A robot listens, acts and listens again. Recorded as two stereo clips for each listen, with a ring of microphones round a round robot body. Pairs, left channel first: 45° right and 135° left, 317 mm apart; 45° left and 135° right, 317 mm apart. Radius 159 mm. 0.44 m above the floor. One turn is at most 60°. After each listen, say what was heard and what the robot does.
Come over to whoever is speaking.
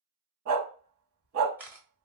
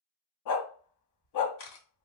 Keep listening.
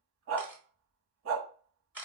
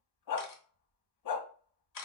Keep listening.
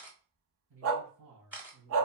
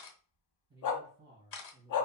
The man speaking: 170° left. Turn 60° left.
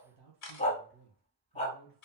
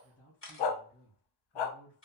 The man speaking is now 110° left. Turn 60° left.
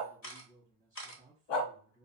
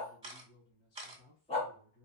The man speaking is now 55° left. Turn 55° left.
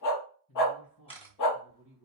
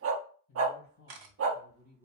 Drive 1.0 m forward.
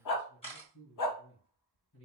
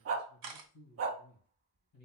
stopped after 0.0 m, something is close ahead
Something is in my way. I am facing the man speaking but have not reached it.